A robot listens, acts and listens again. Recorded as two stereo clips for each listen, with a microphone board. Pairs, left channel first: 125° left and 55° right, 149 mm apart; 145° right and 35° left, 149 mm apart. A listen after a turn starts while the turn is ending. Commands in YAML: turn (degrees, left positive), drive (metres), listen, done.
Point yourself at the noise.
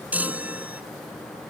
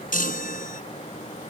turn: -135
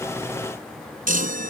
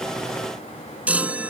turn: -45
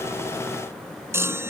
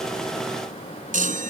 turn: 15
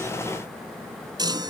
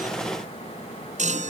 done: "Facing the chime."